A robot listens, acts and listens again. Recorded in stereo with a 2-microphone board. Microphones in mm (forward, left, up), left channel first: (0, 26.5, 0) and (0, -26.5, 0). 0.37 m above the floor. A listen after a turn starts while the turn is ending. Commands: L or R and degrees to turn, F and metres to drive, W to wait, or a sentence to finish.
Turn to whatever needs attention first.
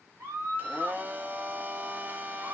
R60
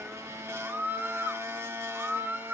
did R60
R40
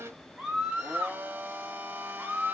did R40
Found it: a scream, straight ahead.